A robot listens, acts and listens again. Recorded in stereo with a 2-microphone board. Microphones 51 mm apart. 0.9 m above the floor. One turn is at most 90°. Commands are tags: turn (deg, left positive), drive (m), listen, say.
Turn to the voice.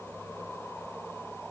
<listen/>
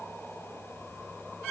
<listen/>
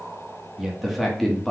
<turn deg="30"/>
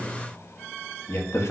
<turn deg="90"/>
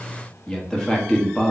<turn deg="15"/>
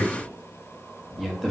<say>Facing the man speaking.</say>